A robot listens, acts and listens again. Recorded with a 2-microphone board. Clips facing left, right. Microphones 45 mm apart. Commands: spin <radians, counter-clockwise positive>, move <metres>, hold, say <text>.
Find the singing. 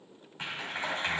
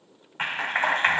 hold
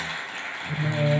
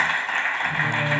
spin 1.57
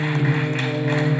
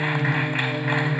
say Facing the singing, 2 to 4 m away.